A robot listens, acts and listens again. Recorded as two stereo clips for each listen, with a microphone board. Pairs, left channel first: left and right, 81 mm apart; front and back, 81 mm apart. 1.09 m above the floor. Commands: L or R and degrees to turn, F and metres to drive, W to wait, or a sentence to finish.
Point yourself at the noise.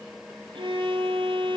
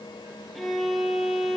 R90
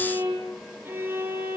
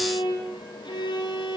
R25
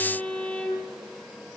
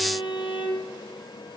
L15
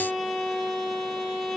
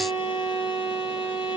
Facing the violin, over 4 m away.